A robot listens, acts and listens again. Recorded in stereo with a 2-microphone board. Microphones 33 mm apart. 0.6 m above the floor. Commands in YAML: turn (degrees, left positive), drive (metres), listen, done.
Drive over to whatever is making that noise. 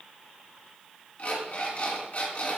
turn: 45
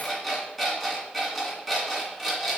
drive: 1.0
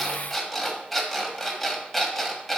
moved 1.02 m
turn: 10
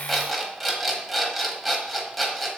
drive: 1.0
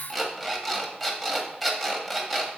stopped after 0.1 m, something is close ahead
done: "Arrived at the alarm clock, straight ahead."